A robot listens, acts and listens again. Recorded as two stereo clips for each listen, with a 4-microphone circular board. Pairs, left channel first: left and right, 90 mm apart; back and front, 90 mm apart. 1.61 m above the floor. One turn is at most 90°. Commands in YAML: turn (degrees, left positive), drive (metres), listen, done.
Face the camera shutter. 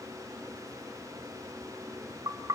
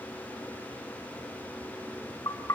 listen: true
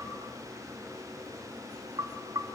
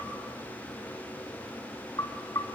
listen: true
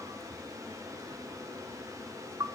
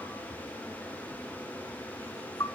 done: "I can't make out a camera shutter to turn to."